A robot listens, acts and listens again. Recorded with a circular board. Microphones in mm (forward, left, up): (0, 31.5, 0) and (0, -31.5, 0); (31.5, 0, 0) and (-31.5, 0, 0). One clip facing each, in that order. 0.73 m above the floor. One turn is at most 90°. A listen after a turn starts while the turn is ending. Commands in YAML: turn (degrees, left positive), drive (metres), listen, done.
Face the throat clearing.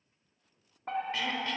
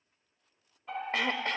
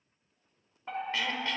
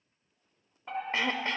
turn: -90
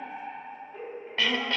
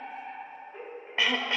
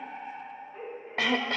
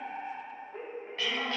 turn: -15
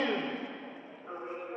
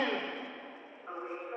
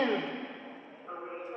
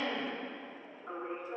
done: "Found it: throat clearing, straight ahead, under 1 m away."